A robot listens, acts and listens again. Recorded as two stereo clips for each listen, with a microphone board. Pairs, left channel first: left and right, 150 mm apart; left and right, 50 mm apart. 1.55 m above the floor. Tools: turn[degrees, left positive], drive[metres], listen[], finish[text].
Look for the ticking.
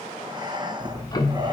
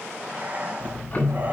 Thought: The ticking: about 25° left or 155° left.
Action: turn[25]
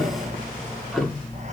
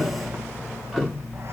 Action: finish[Found it: ticking, straight ahead.]